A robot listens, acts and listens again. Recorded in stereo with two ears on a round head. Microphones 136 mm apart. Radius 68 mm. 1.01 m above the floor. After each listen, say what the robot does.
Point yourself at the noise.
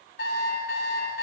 Turn 70° left.
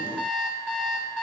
Facing the alarm clock.